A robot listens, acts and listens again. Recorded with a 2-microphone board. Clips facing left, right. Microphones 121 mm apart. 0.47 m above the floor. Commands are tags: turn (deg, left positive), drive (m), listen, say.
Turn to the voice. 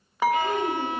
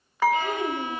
<turn deg="-15"/>
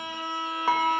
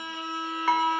<listen/>
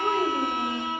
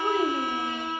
<say>Facing the child speaking, 1 to 2 m away.</say>